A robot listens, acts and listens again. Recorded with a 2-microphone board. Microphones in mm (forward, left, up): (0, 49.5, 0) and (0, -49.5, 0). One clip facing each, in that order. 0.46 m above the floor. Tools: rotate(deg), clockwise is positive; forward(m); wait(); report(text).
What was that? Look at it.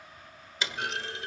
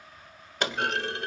rotate(55)
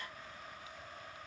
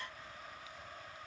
wait()
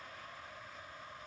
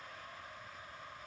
report("I heard a clunk, but can't make it out now. It was about straight ahead or 70° right.")